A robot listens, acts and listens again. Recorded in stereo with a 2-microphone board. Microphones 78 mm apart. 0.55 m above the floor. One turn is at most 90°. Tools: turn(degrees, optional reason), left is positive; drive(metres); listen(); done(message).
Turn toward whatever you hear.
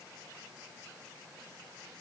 listen()
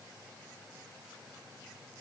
listen()
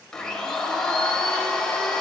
turn(degrees=30)
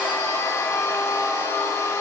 turn(degrees=90, reason="So it is at 140° left.")
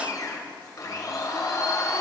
turn(degrees=50, reason="The blender is now 50° left.")
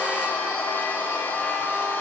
turn(degrees=25, reason="The blender is now 25° left.")
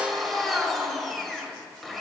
done("Found it: a blender, straight ahead.")